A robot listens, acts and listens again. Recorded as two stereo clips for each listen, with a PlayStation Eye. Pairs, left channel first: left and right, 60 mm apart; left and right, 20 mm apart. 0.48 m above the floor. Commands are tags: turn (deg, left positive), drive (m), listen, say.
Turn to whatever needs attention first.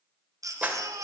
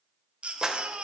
<turn deg="-70"/>
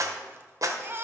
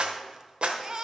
<turn deg="-35"/>
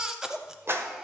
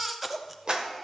<say>Facing the baby crying.</say>